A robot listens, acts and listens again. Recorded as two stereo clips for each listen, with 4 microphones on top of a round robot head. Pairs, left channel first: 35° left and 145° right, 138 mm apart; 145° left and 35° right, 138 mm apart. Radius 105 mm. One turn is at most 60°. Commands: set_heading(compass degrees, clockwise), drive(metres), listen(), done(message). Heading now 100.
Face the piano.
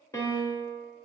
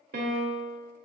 set_heading(130)
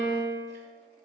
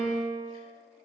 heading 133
done("Facing the piano, 1 to 2 m away.")